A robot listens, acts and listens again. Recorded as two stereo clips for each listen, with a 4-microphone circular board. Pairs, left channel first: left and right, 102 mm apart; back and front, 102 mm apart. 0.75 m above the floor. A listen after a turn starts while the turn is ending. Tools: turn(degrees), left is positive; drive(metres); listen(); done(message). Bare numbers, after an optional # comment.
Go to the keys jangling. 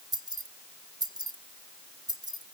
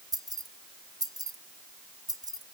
# The keys jangling: 50° right.
turn(-50)
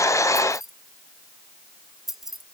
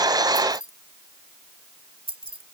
drive(1.0)
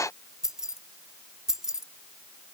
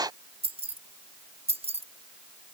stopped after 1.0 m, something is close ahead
done("Arrived at the keys jangling, straight ahead.")